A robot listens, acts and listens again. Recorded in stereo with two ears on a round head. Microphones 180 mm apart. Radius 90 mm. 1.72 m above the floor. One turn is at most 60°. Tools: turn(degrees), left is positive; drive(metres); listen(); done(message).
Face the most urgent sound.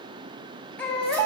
turn(degrees=30)
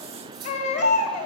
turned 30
turn(degrees=60)
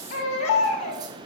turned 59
turn(degrees=60)
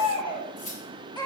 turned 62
turn(degrees=20)
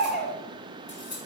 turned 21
done("Found it: a baby crying, straight ahead.")